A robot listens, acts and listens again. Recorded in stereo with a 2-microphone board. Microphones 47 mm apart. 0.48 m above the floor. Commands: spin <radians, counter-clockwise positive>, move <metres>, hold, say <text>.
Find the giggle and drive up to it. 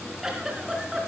spin -0.52
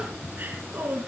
spin -2.44
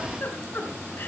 spin 0.79
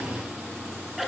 move 1.0
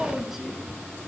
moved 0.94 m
move 1.0
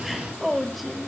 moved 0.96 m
move 1.0
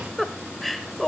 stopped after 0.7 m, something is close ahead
say I am next to the giggle.